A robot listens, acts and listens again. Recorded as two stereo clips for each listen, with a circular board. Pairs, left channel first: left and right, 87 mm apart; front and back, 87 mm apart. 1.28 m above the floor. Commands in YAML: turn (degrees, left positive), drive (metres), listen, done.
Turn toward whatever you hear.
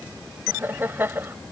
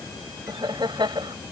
turn: -155
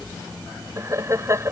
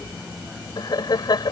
turn: -35
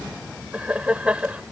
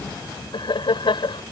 turn: -15
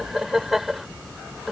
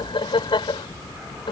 done: "Found it: laughter, straight ahead."